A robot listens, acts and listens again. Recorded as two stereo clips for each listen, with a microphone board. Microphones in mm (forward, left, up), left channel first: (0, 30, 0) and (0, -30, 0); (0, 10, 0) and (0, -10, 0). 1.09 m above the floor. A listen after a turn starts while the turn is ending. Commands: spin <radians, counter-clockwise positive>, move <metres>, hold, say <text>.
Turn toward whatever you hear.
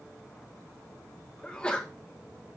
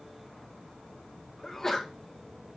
spin 0.26
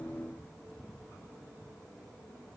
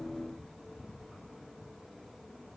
hold
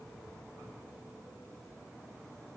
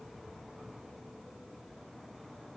say I heard a sneeze, but can't make it out now. It was about straight ahead or 150° left.